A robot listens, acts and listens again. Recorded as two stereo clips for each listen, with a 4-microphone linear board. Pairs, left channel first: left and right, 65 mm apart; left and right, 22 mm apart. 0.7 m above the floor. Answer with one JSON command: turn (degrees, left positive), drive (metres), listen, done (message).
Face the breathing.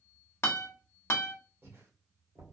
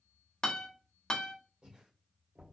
{"turn": -50}
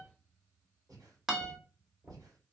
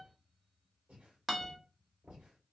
{"turn": -80}
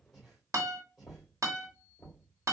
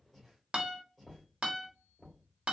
{"done": "Facing the breathing, 1 to 2 m away."}